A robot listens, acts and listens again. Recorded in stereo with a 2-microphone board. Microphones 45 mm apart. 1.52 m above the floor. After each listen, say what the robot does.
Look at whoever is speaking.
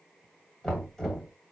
Keep listening.
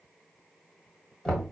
Keep listening.
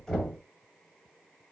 I can't make out anyone speaking to turn to.